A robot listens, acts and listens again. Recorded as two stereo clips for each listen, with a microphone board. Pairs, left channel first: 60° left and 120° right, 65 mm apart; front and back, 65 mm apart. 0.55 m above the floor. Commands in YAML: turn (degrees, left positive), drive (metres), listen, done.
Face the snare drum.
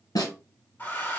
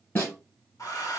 turn: 55
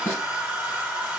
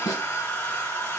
listen: true
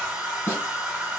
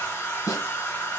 done: "Facing the snare drum."